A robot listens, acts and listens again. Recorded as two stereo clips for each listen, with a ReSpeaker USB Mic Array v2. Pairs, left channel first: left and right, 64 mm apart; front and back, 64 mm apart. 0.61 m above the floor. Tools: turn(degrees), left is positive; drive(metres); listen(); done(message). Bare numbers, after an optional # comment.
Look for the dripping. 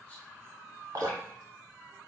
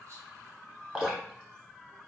# The dripping: 105° right.
turn(-105)
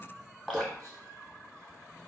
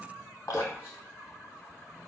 done("Found it: dripping, straight ahead.")